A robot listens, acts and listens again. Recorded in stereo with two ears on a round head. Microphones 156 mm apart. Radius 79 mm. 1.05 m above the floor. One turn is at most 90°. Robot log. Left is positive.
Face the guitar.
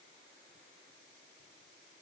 cmd idle
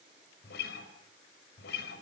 note: The guitar: about 75° left or 105° left.
cmd yaw +75
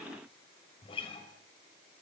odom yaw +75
note: So it is at 30° left.
cmd yaw +30
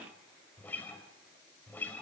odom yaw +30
note: The guitar is now 10° left.
cmd yaw +10
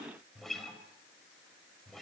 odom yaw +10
end: Found it: a guitar, straight ahead.